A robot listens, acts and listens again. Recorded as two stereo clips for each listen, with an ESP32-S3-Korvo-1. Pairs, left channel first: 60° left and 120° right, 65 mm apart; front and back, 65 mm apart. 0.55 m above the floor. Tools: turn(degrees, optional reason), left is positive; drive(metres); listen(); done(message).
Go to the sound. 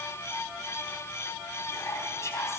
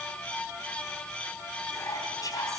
turn(degrees=20, reason="The whispering: 20° left.")
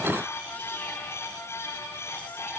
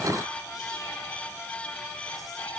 listen()
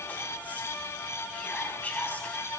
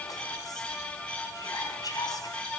drive(metres=1.0)
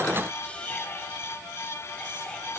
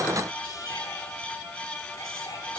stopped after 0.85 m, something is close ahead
turn(degrees=-10, reason="The whispering is now 10° right.")
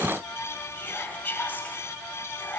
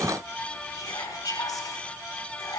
done("Something is in my way. I am facing the whispering but have not reached it.")